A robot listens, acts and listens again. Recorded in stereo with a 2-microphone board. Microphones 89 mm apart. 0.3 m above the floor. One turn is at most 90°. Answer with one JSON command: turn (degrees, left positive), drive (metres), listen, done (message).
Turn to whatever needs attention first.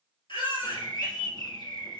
{"turn": 70}
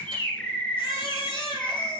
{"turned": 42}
{"turn": 70}
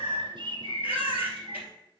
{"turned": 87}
{"turn": -20}
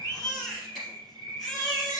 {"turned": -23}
{"done": "Found it: a baby crying, straight ahead, 2 to 4 m away."}